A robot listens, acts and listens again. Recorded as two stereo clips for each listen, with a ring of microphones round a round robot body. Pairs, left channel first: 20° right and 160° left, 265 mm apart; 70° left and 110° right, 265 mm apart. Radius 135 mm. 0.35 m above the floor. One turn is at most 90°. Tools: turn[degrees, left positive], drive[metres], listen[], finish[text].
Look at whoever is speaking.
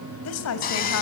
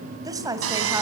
Thought: The woman speaking: 35° right.
Action: turn[-35]
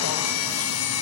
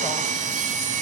Action: listen[]
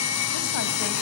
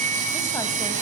Action: listen[]
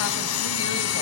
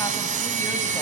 Action: finish[Facing where the woman speaking came from. I can't hear it now.]